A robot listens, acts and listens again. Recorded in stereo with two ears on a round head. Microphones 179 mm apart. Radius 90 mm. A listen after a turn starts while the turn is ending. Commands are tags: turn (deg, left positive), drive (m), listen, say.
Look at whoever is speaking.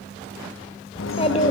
<turn deg="30"/>
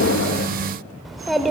<say>Facing the child speaking, 1 to 2 m away.</say>